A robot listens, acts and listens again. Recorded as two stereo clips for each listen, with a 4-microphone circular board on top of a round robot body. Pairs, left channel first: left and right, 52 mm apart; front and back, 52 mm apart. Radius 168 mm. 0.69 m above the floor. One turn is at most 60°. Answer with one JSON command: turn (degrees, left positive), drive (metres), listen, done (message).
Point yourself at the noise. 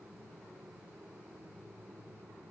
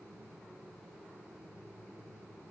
{"listen": true}
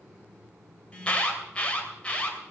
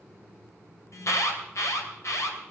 {"turn": 25}
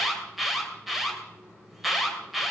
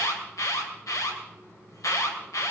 {"done": "Facing the alarm."}